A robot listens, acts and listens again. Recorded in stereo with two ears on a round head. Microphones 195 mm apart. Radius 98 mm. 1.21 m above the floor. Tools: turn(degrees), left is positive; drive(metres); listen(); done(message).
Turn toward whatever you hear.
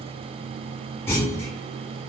turn(degrees=30)
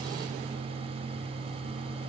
listen()
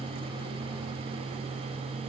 done("I heard a clunk, but can't make it out now. It was about 20° right or 140° left.")